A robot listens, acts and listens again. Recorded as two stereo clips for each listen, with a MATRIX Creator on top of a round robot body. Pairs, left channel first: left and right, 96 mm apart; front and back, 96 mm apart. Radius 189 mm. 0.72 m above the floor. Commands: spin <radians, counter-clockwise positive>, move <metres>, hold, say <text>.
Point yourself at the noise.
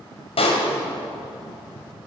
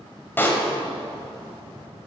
spin 1.22
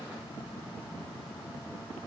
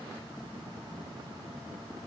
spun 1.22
say Facing where the pop came from. I can't hear it now.